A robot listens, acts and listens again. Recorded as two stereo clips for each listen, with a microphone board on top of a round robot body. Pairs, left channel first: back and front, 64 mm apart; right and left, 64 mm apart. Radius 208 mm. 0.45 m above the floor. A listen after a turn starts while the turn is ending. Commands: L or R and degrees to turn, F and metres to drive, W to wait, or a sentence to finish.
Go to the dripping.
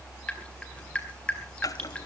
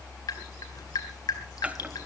R105
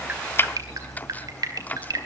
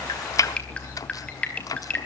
R20
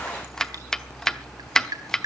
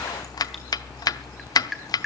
F1.0
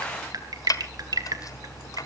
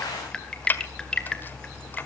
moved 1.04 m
R15
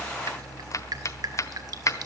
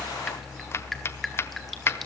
W
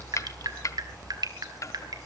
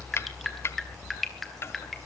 F1.0
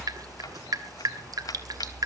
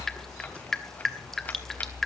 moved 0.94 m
R10
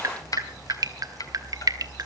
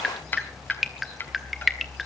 F1.0
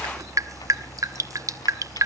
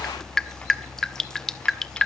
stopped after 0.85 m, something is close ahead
R10
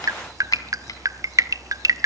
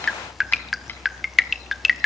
Arrived at the dripping, straight ahead.